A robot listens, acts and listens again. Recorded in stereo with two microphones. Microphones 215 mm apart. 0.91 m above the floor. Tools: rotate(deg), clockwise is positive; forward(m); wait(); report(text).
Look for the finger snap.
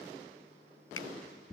rotate(-90)
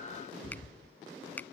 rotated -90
rotate(-10)
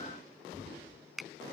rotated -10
report("Facing the finger snap.")